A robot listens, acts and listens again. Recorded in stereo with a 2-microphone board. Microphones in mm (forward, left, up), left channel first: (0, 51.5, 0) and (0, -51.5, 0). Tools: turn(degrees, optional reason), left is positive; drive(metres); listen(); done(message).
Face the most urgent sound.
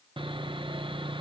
listen()
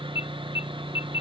turn(degrees=55, reason="The alarm: about 55° left or 125° left.")
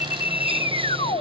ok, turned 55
turn(degrees=65, reason="So it is at 65° left.")
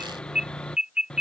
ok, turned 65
turn(degrees=-10, reason="The alarm is now 10° right.")
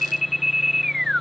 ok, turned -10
done("Found it: an alarm, straight ahead.")